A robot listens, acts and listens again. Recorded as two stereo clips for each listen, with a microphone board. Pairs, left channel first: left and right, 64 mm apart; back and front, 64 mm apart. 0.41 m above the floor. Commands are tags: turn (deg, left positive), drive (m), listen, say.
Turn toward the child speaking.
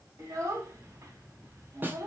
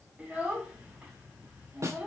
<turn deg="-65"/>
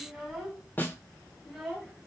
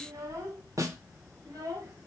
<say>Found it: a child speaking, straight ahead, 1 to 2 m away.</say>